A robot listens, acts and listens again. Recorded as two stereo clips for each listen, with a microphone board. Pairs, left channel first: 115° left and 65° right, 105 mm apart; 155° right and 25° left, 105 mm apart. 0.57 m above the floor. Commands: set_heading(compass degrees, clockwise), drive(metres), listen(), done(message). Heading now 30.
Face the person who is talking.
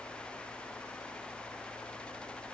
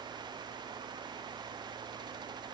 listen()
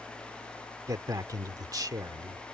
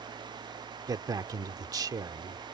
set_heading(50)
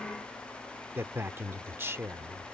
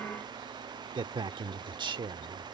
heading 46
done("Facing the man speaking.")